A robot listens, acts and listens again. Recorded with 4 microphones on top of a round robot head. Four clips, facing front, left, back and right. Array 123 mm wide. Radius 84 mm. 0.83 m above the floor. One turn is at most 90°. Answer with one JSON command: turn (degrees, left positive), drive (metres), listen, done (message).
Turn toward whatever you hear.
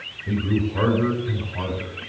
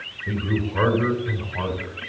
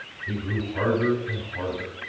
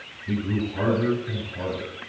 {"turn": 75}
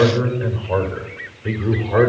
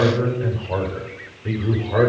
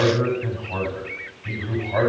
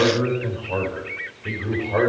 {"turn": 25}
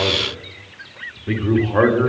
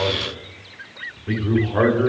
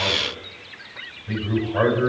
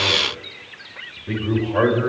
{"turn": 15}
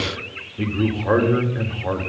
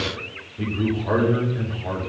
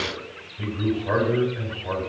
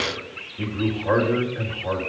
{"done": "Facing the man speaking, 2 to 4 m away."}